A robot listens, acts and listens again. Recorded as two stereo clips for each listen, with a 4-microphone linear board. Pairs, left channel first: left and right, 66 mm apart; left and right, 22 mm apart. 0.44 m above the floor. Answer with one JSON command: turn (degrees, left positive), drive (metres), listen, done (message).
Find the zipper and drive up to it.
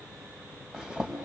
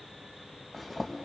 {"turn": -30}
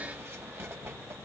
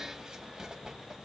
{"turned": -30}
{"turn": -140}
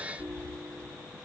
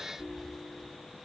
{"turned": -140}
{"turn": 10}
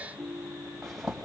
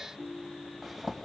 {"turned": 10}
{"drive": 1.0}
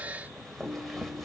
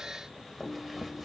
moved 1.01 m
{"drive": 1.0}
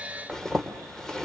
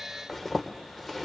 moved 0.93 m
{"turn": 15}
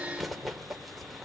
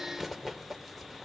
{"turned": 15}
{"drive": 1.0}
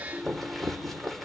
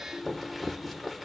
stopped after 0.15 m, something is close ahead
{"done": "Arrived at the zipper, straight ahead."}